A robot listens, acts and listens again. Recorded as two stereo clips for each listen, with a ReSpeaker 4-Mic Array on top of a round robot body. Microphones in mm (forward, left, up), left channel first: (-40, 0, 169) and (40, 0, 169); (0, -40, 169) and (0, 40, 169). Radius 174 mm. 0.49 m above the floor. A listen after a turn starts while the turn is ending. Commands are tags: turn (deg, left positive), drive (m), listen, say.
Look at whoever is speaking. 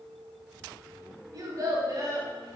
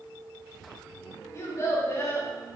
<turn deg="-40"/>
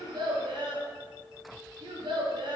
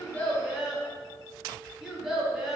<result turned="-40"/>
<say>Facing the child speaking, 1 to 2 m away.</say>